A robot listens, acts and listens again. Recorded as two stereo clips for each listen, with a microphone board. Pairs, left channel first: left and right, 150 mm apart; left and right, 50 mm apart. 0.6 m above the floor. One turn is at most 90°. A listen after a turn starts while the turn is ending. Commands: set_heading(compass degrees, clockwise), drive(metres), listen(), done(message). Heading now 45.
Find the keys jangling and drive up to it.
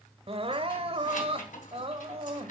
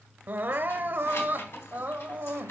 set_heading(345)
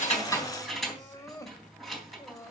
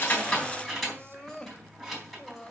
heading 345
drive(1.0)
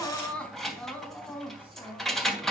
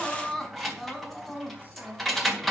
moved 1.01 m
drive(1.0)
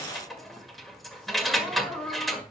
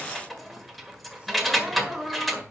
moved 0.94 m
drive(1.0)
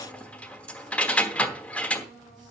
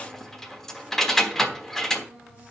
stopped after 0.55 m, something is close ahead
set_heading(335)
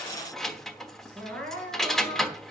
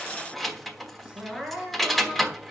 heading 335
done("Arrived at the keys jangling, straight ahead.")